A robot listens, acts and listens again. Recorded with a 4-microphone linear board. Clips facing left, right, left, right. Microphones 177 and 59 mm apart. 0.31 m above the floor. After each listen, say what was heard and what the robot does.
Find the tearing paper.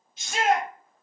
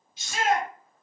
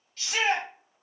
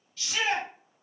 Keep listening.
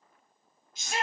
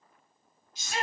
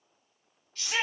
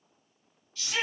Keep listening.
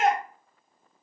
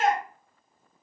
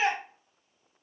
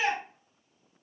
I can't make out tearing paper, only a shout.